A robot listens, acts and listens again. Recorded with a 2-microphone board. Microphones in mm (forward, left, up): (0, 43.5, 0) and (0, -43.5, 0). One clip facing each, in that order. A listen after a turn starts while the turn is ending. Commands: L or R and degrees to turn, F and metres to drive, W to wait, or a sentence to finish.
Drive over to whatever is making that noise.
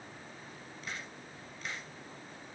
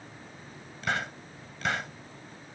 R90
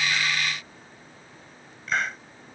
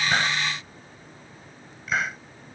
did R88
F1.0
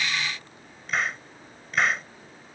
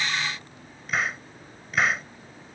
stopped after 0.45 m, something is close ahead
Blocked. The hiss is further on, straight ahead.